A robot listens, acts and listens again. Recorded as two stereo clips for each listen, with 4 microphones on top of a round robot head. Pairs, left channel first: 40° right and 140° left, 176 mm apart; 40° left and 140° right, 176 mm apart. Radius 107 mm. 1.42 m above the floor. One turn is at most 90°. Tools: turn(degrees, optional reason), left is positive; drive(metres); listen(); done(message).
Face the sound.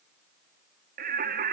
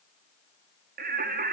turn(degrees=90, reason="The singing: straight behind.")
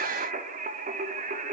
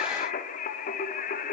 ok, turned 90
turn(degrees=90, reason="The singing is now 90° left.")
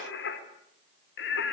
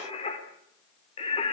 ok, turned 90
turn(degrees=-20, reason="The singing is now 20° right.")
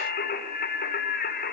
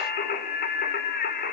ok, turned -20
done("Facing the singing, over 4 m away.")